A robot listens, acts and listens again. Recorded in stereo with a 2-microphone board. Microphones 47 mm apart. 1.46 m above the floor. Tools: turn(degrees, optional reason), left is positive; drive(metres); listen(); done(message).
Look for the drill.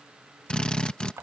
turn(degrees=20, reason="The drill: about 20° left or 160° left.")
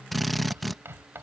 done("Found it: a drill, straight ahead.")